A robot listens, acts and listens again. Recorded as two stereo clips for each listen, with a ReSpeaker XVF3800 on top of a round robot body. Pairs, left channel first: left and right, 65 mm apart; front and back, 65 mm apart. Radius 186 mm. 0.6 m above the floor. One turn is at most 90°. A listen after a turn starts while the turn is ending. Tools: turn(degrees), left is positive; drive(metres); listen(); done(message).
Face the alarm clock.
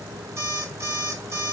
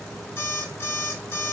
turn(degrees=-50)
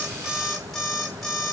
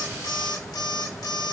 done("Facing the alarm clock.")